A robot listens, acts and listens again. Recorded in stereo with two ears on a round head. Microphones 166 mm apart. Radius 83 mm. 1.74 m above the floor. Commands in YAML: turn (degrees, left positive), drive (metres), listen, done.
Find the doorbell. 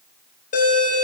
turn: 45
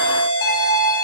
turn: 85
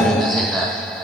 done: "Found it: a doorbell, straight ahead."